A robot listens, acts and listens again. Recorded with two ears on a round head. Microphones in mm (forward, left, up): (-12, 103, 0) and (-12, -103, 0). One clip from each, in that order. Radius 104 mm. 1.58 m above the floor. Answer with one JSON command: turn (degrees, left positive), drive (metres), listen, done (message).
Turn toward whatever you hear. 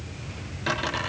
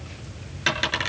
{"turn": -70}
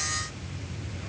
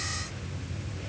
{"listen": true}
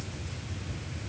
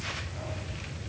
{"done": "I heard a dropped coin, but can't make it out now. It was about straight ahead or 40° right."}